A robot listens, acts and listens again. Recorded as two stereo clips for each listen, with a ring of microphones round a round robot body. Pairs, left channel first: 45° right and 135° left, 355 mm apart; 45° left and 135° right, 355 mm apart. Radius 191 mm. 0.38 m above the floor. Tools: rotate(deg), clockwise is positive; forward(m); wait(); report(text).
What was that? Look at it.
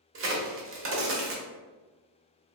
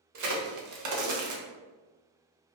rotate(170)
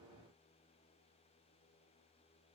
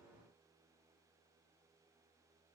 report("Facing where the crack came from. I can't hear it now.")